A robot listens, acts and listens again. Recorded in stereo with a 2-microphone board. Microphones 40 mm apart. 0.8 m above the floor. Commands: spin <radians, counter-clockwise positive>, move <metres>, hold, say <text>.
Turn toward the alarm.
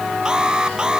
spin -0.35
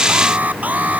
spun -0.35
spin -2.44
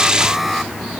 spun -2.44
say Facing the alarm.